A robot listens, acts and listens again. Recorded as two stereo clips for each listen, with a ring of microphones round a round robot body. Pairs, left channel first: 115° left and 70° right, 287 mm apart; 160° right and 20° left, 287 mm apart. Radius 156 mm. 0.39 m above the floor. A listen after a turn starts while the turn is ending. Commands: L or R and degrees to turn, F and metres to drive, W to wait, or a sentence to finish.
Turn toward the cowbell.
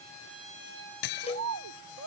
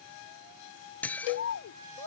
R175
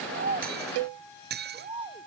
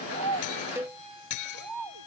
R60
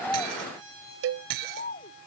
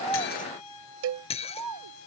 R20
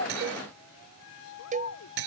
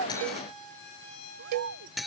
Found it: a cowbell, straight ahead.